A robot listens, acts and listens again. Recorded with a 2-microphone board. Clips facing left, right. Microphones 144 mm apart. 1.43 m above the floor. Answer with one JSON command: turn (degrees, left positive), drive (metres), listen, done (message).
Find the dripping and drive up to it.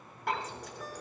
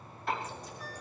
{"turn": 90}
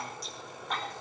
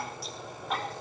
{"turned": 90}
{"drive": 1.0}
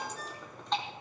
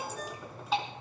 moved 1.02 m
{"drive": 1.0}
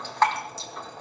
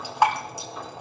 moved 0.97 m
{"turn": -15}
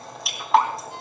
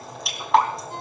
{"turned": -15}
{"drive": 1.0}
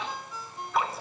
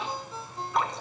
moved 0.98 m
{"drive": 1.0}
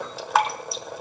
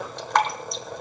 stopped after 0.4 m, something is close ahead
{"done": "Arrived at the dripping, straight ahead."}